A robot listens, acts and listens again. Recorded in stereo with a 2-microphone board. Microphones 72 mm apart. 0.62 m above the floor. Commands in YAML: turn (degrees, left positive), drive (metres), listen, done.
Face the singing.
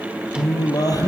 turn: 60
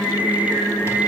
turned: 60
turn: 65
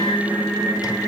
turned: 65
done: "Found it: singing, straight ahead."